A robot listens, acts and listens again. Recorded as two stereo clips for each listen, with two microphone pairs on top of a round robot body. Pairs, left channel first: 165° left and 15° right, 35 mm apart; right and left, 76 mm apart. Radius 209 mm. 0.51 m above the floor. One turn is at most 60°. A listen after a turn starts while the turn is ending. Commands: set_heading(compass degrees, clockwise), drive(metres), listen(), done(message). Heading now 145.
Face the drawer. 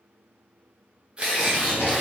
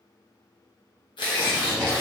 set_heading(205)
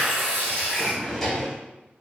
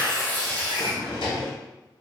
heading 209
set_heading(269)
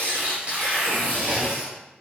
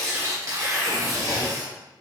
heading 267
set_heading(312)
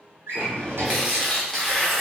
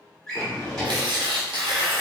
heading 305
done("Facing the drawer.")